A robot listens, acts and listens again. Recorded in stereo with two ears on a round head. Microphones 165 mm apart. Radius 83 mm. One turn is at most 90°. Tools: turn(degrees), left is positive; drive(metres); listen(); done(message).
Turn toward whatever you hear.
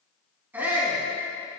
turn(degrees=-30)
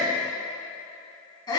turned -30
turn(degrees=20)
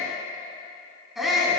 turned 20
done("Found it: a shout, straight ahead, over 4 m away.")